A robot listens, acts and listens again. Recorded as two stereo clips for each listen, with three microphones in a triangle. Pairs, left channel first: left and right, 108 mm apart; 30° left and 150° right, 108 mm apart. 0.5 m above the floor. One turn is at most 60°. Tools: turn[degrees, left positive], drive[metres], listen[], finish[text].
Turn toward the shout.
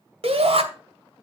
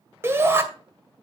Thought: The shout: 85° right.
Action: turn[-60]
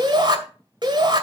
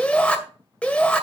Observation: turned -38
Thought: The shout is now 50° right.
Action: turn[-50]
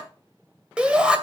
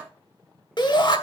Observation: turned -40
Thought: The shout is now 10° right.
Action: turn[-10]
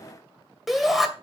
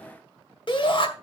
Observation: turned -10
Action: finish[Facing the shout, 2 to 4 m away.]